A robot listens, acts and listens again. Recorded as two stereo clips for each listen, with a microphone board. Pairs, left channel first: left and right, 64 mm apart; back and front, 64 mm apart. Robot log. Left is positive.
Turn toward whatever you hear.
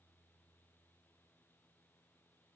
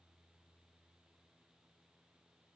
cmd idle
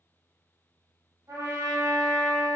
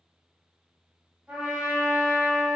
note: The trumpet: 75° right.
cmd yaw -75
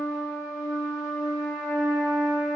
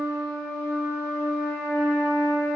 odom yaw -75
note: The trumpet is now 15° right.
cmd yaw -15
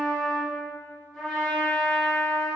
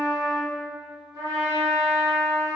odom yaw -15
end: Facing the trumpet, 1 to 2 m away.